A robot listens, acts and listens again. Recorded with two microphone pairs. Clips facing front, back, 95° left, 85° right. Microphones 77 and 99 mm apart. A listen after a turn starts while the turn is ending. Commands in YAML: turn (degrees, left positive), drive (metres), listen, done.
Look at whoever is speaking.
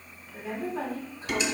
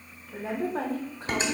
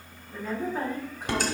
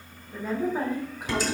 turn: -160
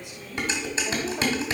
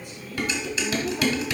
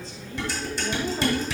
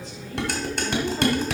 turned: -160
listen: true
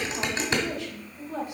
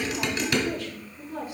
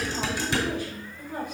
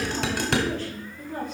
turn: 20
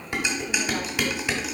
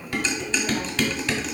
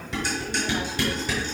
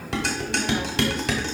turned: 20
listen: true
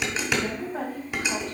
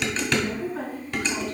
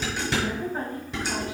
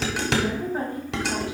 done: "Facing the woman speaking, 2 to 4 m away."